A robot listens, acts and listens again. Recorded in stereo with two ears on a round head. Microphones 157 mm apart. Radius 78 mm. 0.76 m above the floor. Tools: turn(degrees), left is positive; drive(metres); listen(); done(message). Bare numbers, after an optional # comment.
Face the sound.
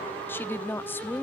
turn(30)
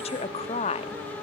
# So it is at 140° left.
turn(140)
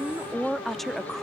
done("Found it: a woman speaking, straight ahead.")